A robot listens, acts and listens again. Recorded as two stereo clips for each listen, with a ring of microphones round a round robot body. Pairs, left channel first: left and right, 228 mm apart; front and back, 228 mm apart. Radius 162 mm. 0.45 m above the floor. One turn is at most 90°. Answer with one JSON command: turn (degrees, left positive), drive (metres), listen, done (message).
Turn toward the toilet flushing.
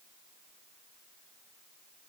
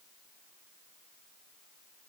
{"listen": true}
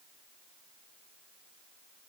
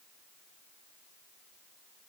{"listen": true}
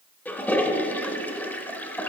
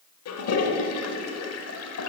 {"done": "Facing the toilet flushing."}